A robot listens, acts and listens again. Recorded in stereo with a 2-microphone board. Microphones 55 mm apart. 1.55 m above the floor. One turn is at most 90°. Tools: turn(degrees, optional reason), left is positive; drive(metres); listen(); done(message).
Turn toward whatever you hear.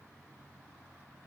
listen()
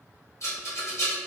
turn(degrees=60, reason="The rattle: about 60° left or 120° left.")
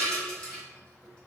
turn(degrees=20, reason="So it is at 20° left.")
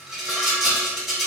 done("Facing the rattle, 1 to 2 m away.")